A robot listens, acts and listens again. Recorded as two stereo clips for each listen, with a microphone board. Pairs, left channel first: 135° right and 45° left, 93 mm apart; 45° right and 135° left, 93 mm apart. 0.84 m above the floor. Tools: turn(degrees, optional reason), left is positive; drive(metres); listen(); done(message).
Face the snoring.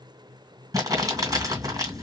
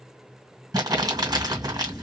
turn(degrees=10, reason="The snoring: 10° left.")
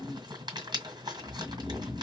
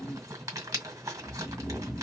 done("Found it: snoring, straight ahead, 1 to 2 m away.")